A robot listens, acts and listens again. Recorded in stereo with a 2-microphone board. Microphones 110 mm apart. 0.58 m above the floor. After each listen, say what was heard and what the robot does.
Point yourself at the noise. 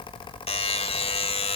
The buzzer: about 65° left or 115° left. Turn 65° left.
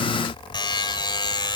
So it is at 45° left. Turn 45° left.
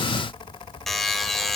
Found it: a buzzer, straight ahead.